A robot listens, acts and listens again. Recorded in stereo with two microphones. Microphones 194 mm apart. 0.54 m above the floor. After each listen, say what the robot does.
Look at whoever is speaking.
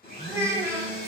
Turn 15° right.
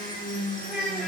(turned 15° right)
Found it: a child speaking, straight ahead, 1 to 2 m away.